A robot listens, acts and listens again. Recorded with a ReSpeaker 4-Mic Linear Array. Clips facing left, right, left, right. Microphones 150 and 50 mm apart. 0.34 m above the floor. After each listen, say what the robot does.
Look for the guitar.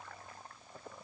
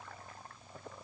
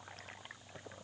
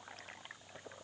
Keep listening.
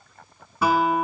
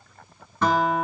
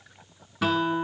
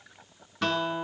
Turn 30° left.
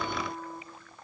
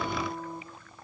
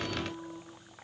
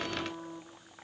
Turn 20° right.
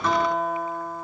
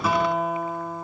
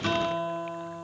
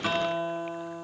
Turn 10° right.
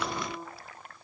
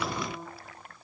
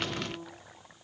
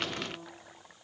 Facing the guitar, 1 to 2 m away.